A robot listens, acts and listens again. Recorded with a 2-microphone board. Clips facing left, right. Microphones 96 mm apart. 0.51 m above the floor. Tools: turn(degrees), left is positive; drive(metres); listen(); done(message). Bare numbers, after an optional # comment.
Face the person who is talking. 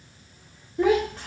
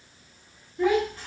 # The child speaking: about 70° left or 110° left.
turn(70)
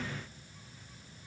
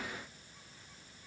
listen()
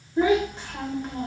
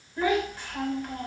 # So it is at 25° left.
turn(25)
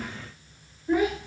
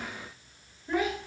done("Found it: a child speaking, straight ahead, 1 to 2 m away.")